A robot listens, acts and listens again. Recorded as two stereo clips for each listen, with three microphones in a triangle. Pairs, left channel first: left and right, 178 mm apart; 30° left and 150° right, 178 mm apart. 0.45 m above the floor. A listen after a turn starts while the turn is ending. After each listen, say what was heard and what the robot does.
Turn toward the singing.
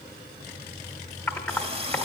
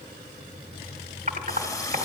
Keep listening.
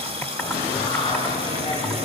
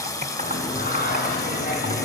The singing: 40° left. Turn 40° left.
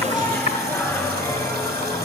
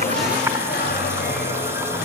The singing is now 20° left. Turn 20° left.
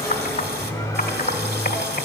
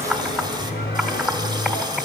The singing is now 20° left. Turn 20° left.
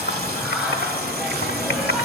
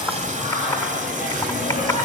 Found it: singing, straight ahead.